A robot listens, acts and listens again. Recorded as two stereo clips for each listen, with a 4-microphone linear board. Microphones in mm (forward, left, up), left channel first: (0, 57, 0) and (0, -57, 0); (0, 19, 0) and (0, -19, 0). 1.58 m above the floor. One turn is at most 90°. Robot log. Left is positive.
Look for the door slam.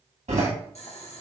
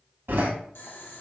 cmd yaw -90
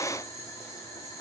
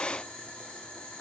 end: I heard a door slam from this way, but can't make it out now.